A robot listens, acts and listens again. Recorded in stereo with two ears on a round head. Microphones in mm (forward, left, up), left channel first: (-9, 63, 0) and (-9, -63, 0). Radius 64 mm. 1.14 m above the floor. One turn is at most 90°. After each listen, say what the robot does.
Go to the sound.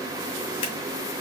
Keep listening.
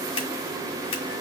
Turn 40° left.
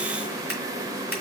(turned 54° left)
Turn 15° right.
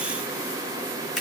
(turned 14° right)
Keep listening.
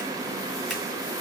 Keep listening.
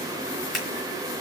Drive 1.0 m forward.
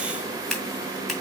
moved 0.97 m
Drive 1.0 m forward.
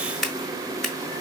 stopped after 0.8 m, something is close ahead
I am next to the scissors.